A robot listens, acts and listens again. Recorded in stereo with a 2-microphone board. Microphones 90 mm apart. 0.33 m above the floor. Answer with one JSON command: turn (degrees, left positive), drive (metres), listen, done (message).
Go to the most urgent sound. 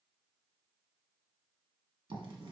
{"listen": true}
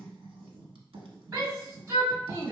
{"turn": -35}
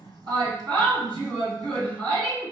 {"turn": -105}
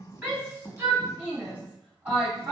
{"turn": -20}
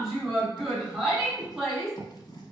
{"drive": 1.0}
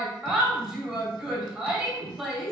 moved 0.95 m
{"turn": -10}
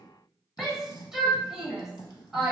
{"drive": 1.0}
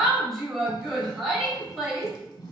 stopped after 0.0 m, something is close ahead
{"done": "Arrived at the shout, straight ahead."}